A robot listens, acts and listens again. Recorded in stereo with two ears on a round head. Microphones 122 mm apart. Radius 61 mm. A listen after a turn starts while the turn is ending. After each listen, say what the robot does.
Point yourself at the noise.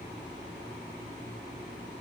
Keep listening.
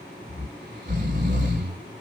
Turn 70° right.
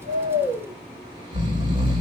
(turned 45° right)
Turn 40° right.
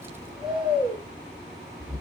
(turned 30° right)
Turn 10° right.
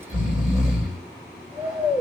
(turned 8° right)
Facing the snoring, 2 to 4 m away.